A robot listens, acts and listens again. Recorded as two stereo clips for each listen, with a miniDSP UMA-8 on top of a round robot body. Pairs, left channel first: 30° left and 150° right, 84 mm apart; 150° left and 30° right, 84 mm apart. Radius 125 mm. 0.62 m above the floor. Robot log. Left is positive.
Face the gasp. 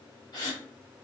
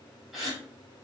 note: The gasp: 55° left.
cmd yaw +55
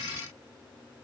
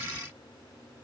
end: Facing where the gasp came from. I can't hear it now.